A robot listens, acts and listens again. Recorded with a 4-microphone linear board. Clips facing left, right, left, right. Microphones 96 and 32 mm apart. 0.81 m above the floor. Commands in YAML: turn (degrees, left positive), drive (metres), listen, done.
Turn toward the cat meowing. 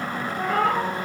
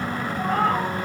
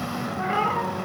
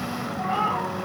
turn: 90
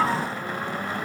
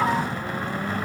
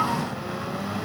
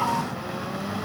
listen: true
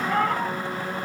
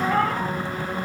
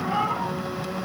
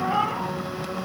turn: 10
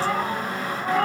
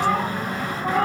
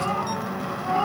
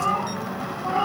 turn: 10
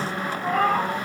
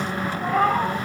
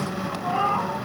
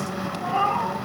done: "Found it: a cat meowing, straight ahead, over 4 m away."